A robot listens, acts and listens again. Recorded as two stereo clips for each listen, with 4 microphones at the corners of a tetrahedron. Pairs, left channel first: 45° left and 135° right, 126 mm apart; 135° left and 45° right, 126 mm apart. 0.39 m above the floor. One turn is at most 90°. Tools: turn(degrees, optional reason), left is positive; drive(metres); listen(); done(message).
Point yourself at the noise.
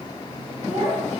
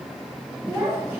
turn(degrees=-90, reason="The child speaking: 115° right.")
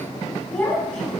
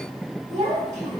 turn(degrees=-40, reason="The child speaking is now 40° right.")
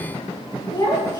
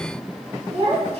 turn(degrees=-15, reason="The child speaking is now 15° right.")
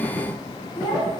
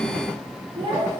done("Facing the child speaking, 2 to 4 m away.")